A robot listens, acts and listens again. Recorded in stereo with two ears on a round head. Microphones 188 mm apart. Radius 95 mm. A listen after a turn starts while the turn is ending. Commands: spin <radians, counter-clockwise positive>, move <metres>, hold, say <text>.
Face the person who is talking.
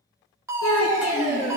spin 1.57
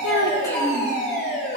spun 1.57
hold
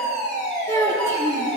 spin 0.26
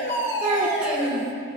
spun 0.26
say Found it: a child speaking, straight ahead, 2 to 4 m away.